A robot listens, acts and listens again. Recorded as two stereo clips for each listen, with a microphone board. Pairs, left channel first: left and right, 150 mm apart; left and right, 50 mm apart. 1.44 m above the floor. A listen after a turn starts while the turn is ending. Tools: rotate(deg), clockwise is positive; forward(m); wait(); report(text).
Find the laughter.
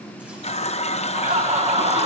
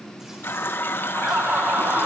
rotate(40)
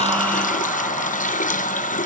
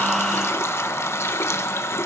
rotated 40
wait()
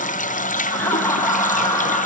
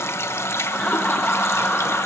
rotate(-20)
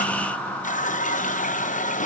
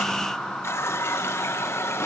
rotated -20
rotate(-10)
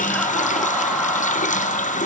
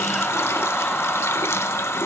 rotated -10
wait()
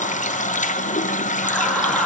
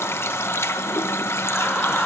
wait()
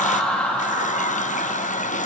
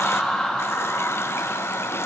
report("Found it: laughter, straight ahead.")